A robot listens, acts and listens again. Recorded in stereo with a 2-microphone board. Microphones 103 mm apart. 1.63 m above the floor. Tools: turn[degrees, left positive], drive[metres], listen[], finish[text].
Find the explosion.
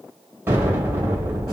Thought: The explosion: about 20° right or 160° right.
Action: turn[-20]
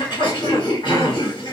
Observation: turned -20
Action: listen[]
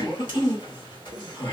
Action: finish[I heard an explosion, but can't make it out now. It was about straight ahead or 140° right.]